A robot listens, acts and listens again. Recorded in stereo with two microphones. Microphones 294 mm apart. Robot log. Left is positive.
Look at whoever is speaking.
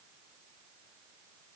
cmd idle
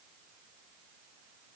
cmd idle
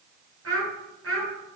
note: The child speaking: about 50° right or 130° right.
cmd yaw -50
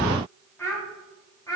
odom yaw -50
note: So it is at 10° left.
cmd yaw +10
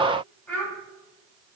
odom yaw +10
end: Found it: a child speaking, straight ahead, over 4 m away.